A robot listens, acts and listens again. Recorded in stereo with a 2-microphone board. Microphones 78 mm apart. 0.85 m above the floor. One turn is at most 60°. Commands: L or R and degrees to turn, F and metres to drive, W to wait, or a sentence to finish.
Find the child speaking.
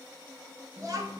R55
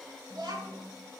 R60
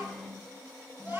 R25
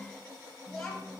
L10
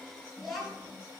Found it: a child speaking, straight ahead.